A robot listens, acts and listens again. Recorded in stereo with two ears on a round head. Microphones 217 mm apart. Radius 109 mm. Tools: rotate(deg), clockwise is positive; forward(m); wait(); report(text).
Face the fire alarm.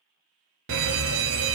rotate(55)
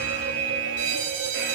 rotate(60)
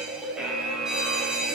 report("Found it: a fire alarm, straight ahead.")